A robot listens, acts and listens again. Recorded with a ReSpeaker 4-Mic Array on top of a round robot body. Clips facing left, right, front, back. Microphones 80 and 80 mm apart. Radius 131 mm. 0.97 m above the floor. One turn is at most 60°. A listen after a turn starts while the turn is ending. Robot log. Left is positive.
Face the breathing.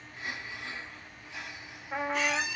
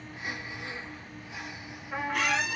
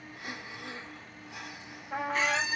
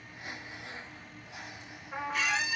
note: The breathing: 15° right.
cmd yaw -15
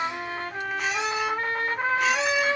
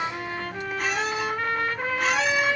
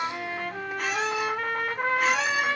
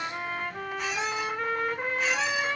cmd idle
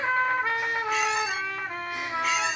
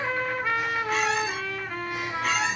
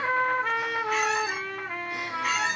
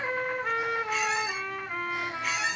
cmd idle
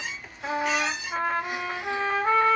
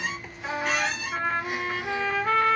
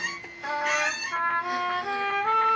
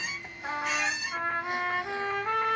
end: I heard breathing from this way, but can't make it out now.